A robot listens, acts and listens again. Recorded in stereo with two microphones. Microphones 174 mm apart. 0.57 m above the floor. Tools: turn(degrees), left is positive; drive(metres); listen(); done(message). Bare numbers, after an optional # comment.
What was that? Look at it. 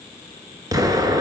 # The explosion: about 20° right or 160° right.
turn(-20)
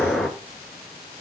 done("Found it: an explosion, straight ahead, 1 to 2 m away.")